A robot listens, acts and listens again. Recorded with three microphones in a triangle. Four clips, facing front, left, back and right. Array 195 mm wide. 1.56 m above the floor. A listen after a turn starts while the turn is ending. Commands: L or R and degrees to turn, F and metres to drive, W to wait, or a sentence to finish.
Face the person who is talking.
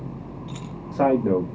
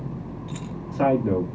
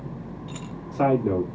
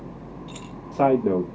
R50
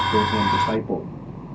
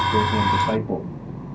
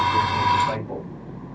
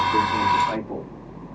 W
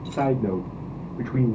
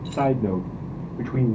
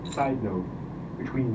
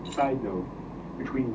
L50
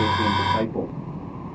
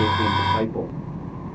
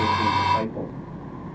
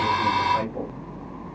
W
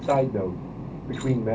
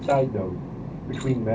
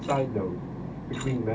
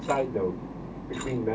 L35
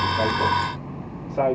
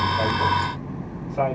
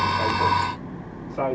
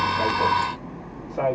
R10
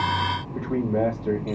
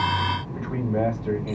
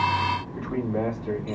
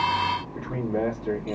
Found it: a man speaking, straight ahead.